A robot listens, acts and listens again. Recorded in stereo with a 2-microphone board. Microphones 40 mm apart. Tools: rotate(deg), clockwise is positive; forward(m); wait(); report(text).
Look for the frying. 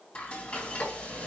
rotate(-25)
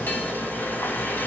wait()
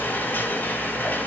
rotate(-130)
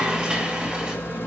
rotate(15)
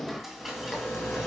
report("Found it: frying, straight ahead, 2 to 4 m away.")